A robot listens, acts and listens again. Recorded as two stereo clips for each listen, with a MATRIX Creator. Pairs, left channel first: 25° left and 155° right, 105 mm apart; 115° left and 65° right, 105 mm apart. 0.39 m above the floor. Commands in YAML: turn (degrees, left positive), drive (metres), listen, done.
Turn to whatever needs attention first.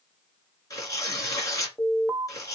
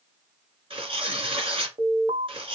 turn: -85
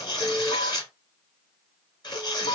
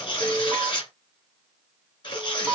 turn: 20
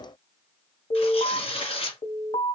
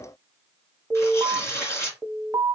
done: "Facing the alarm."